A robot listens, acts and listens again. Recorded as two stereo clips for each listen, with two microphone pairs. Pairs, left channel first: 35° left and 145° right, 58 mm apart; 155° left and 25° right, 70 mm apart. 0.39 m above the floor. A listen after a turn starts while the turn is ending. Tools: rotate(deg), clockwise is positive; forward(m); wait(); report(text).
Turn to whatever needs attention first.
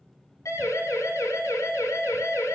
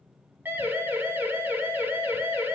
rotate(-35)
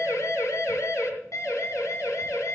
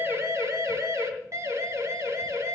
rotate(-20)
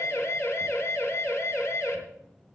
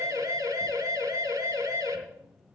report("Facing the siren.")